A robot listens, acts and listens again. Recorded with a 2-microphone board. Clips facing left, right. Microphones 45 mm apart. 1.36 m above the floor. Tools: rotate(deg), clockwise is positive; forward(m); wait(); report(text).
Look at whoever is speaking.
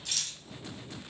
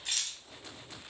wait()
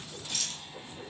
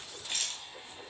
wait()
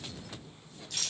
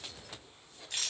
report("I can't make out anyone speaking to turn to.")